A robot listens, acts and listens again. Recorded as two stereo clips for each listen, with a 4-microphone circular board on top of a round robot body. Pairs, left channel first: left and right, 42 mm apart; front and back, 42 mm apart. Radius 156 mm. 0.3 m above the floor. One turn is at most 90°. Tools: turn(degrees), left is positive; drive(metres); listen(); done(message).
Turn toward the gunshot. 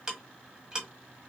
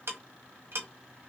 listen()
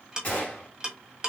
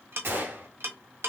turn(degrees=90)
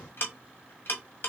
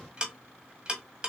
turn(degrees=60)
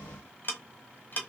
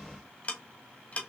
done("I heard a gunshot from this way, but can't make it out now.")